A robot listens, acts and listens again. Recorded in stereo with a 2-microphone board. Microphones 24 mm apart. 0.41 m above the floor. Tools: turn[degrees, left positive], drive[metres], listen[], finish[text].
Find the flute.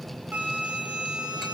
Thought: The flute: about 65° right or 115° right.
Action: turn[-65]
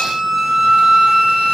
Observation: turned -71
Thought: So it is at 20° right.
Action: turn[-20]
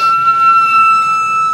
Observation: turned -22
Action: finish[Facing the flute.]